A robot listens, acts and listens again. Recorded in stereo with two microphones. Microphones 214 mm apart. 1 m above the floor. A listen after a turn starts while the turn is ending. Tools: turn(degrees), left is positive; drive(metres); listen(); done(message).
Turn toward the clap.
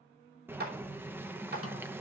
turn(degrees=-45)
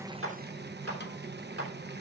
turn(degrees=-85)
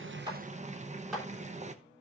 done("Facing the clap, 2 to 4 m away.")